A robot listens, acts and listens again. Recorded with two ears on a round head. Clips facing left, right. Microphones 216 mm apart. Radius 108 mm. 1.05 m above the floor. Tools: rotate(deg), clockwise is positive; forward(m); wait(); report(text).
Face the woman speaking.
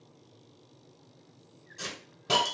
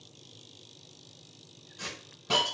wait()
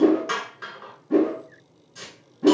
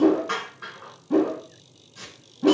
wait()
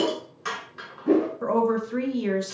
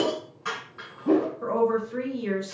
rotate(-55)
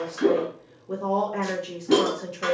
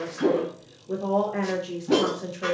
report("Facing the woman speaking.")